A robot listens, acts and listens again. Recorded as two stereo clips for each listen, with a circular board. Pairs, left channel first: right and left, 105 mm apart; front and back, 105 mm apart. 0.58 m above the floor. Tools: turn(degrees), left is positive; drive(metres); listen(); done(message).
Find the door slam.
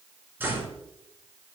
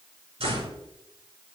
turn(degrees=160)
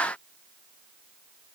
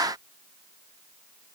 done("Facing where the door slam came from. I can't hear it now.")